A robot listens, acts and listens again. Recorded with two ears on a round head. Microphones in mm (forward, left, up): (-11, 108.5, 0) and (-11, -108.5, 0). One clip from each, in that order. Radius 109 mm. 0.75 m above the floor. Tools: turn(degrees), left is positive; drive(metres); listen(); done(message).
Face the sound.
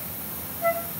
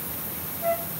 turn(degrees=20)
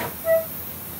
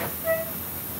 done("Found it: a flute, straight ahead.")